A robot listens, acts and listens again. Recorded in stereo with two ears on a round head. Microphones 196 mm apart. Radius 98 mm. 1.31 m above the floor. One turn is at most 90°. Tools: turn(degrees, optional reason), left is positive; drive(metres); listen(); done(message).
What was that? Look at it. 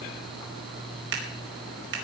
turn(degrees=-55, reason="The scissors: about 55° right or 125° right.")
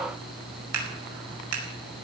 turn(degrees=-75, reason="So it is at 75° right.")
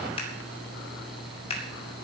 turn(degrees=25, reason="The scissors is now 25° left.")
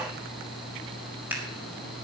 turn(degrees=-10, reason="The scissors is now 10° right.")
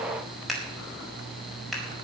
done("Found it: scissors, straight ahead.")